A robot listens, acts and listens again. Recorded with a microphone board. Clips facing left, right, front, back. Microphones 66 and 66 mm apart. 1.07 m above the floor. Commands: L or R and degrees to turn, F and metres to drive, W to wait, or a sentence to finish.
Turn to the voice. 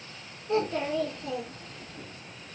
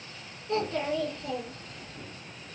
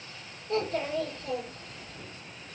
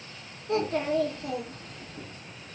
L170
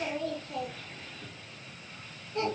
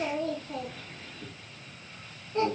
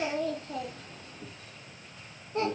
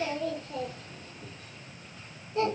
R30
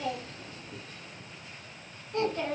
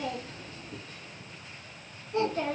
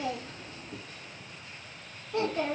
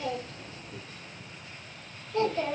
R15
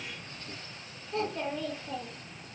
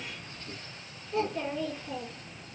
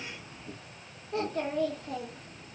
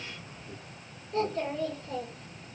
Found it: a child speaking, straight ahead, 1 to 2 m away.